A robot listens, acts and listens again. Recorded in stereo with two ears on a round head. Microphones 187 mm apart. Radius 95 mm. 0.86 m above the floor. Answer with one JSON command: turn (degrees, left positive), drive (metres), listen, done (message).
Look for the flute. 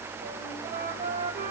{"turn": -45}
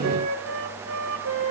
{"turn": -90}
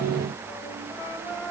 {"turn": 15}
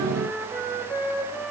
{"done": "Facing the flute."}